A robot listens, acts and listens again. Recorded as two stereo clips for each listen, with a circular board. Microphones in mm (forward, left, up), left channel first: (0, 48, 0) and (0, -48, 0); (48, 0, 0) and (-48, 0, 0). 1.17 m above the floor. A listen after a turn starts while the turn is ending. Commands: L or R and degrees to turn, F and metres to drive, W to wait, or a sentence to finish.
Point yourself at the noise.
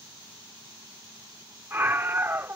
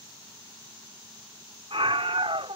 R155
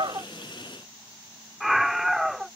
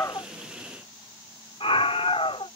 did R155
Facing the scream.